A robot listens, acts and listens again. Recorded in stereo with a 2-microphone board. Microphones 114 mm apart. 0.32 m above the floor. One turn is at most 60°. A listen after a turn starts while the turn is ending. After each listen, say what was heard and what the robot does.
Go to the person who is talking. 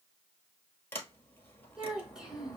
Turn 30° right.
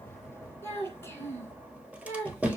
So it is at 25° left. Turn 25° left.
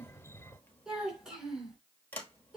Drive 1.0 m forward.
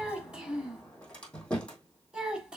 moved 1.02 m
The child speaking is now 10° right. Turn 10° right.
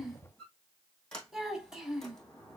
Drive 1.0 m forward.
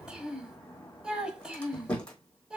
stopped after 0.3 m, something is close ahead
The child speaking is now 10° right. Turn 10° right.
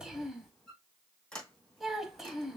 I am next to the child speaking.